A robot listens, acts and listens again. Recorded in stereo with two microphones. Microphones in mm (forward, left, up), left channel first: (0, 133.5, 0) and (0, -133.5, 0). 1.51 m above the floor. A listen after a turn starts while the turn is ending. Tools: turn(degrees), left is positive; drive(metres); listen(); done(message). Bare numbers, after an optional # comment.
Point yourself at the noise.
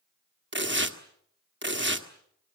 # The tearing paper: about 40° right or 140° right.
turn(-40)
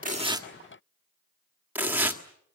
# So it is at 10° right.
turn(-10)
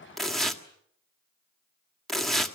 done("Found it: tearing paper, straight ahead, 1 to 2 m away.")